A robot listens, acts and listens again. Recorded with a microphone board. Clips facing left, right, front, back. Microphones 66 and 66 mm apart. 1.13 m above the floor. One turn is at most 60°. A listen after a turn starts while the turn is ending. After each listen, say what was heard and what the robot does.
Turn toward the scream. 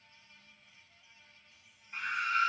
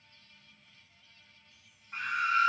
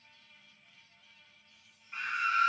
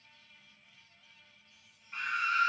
The scream: 80° right. Turn 60° right.
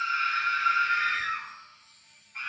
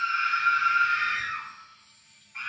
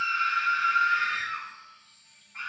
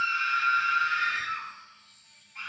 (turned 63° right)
The scream is now 15° right. Turn 15° right.
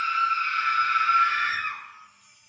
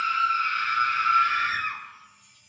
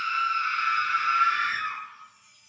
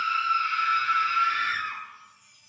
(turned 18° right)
Facing the scream, 1 to 2 m away.